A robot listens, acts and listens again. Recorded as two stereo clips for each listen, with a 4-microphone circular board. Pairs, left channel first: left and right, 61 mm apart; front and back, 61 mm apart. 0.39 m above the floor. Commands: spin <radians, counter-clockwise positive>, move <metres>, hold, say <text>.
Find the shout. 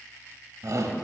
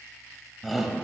spin -1.66
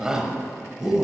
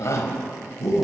spin -0.17
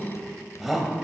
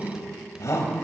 say Facing the shout.